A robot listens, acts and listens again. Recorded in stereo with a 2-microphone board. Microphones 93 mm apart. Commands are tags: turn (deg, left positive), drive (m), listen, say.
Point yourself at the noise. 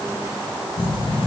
<turn deg="70"/>
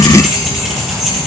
<say>Facing the keys jangling, over 4 m away.</say>